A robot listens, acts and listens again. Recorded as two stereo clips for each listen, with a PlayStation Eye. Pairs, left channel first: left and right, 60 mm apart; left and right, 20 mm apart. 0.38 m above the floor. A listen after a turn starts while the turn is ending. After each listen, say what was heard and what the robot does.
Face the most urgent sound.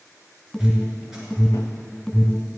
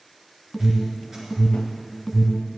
The alarm: about 15° left or 165° left. Turn 15° left.
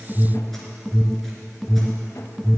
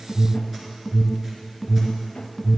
Facing the alarm, 1 to 2 m away.